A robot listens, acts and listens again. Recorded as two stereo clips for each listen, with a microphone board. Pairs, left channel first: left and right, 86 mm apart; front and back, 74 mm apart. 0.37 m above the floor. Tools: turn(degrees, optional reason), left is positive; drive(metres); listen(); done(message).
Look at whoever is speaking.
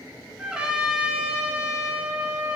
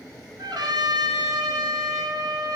listen()
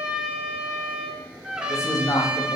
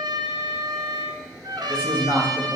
turn(degrees=125, reason="The man speaking: 125° left.")
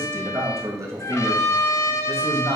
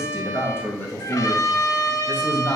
turn(degrees=-55, reason="The man speaking is now 55° right.")
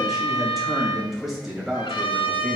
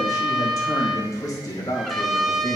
done("Facing the man speaking, 2 to 4 m away.")